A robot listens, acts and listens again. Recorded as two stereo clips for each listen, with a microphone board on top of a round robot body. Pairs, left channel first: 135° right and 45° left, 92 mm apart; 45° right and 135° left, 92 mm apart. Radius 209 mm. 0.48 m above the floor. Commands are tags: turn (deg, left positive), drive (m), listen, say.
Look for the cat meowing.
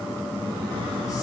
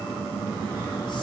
<listen/>
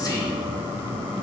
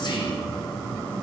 <listen/>
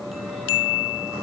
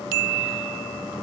<say>I can't make out a cat meowing.</say>